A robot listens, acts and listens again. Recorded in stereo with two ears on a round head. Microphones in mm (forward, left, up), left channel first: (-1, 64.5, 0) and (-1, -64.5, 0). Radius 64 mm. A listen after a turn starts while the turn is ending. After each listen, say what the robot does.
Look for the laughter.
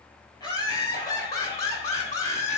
Turn 25° left.
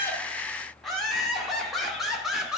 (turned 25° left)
Found it: laughter, straight ahead, 1 to 2 m away.